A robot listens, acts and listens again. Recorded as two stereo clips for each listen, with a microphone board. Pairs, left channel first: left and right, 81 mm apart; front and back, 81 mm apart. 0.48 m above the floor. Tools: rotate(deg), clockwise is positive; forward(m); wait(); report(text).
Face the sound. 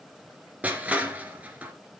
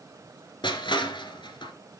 rotate(20)
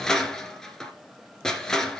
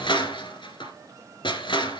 report("Found it: crushing, straight ahead, 2 to 4 m away.")